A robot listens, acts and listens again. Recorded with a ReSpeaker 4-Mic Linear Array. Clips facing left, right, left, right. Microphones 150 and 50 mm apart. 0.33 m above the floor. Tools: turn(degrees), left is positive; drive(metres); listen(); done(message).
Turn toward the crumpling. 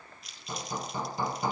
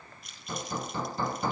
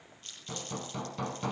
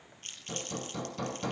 turn(degrees=-50)
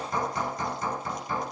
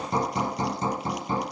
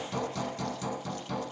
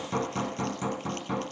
listen()
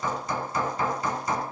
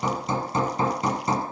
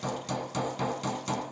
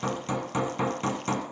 listen()
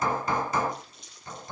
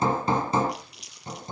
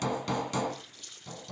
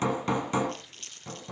turn(degrees=-85)
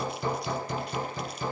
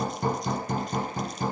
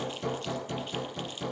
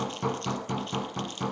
listen()
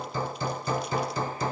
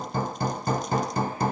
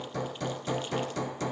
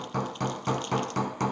listen()
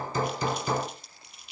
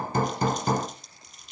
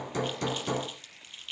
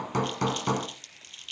done("Found it: crumpling, straight ahead, 2 to 4 m away.")